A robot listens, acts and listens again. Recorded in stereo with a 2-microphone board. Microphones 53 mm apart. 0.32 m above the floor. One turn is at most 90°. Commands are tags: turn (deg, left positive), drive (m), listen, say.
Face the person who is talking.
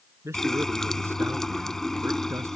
<turn deg="-65"/>
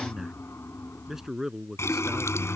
<turn deg="-10"/>
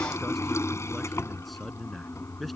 <say>Found it: a man speaking, straight ahead.</say>